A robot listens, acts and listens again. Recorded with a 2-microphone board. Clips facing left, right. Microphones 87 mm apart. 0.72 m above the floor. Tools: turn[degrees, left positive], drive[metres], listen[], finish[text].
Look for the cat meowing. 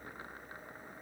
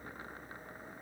Action: listen[]
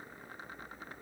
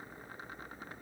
Action: listen[]
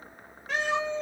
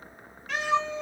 Thought: The cat meowing: about 30° left or 150° left.
Action: turn[30]
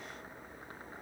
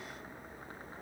Action: listen[]
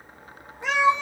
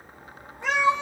Action: finish[Found it: a cat meowing, straight ahead.]